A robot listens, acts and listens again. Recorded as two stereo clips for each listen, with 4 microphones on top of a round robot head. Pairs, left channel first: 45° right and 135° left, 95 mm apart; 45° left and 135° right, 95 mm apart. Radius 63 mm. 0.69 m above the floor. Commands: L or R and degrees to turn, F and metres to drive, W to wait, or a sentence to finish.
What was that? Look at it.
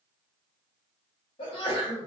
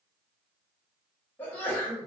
R25
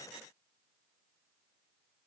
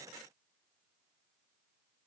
Facing where the sneeze came from. I can't hear it now.